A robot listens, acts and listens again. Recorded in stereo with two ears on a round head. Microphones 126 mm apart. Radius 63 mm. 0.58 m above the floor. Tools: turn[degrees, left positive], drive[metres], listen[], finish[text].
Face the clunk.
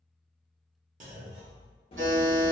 Thought: The clunk: about 55° right or 125° right.
Action: turn[-55]
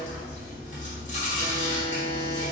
Action: listen[]
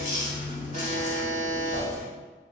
Action: finish[I heard a clunk, but can't make it out now. It was about straight ahead or 70° right.]